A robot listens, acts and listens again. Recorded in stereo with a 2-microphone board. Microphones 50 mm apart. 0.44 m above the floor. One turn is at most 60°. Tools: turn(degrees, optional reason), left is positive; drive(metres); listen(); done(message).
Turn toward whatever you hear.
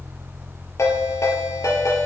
turn(degrees=60)
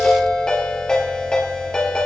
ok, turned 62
turn(degrees=15, reason="So it is at 15° left.")
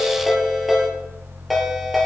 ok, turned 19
done("Found it: a ringtone, straight ahead.")